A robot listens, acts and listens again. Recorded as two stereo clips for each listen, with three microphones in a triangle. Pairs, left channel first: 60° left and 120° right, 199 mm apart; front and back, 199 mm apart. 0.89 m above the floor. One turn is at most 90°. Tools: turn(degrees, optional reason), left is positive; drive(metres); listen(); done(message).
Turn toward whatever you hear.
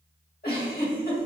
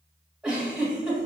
turn(degrees=90, reason="The giggle: 95° left.")
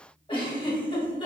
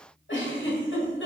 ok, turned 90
done("Facing the giggle, 1 to 2 m away.")